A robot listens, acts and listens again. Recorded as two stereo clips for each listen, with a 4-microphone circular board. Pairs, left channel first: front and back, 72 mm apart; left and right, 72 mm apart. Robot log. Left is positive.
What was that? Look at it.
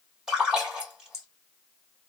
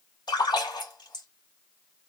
note: The splash: 100° left.
cmd yaw +100
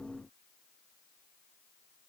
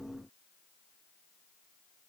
end: I heard a splash from this way, but can't make it out now.